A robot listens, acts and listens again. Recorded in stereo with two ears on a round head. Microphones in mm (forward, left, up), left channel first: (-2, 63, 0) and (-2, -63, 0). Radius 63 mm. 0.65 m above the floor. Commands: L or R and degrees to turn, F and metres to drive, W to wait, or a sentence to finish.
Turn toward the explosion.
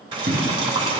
R90
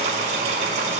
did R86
I heard an explosion from this way, but can't make it out now.